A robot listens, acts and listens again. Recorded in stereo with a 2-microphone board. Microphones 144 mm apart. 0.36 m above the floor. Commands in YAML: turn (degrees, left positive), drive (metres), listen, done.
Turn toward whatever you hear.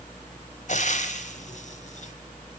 turn: 55
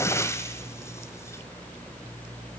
turn: 20
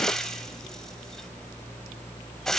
done: "Found it: frying, straight ahead, 1 to 2 m away."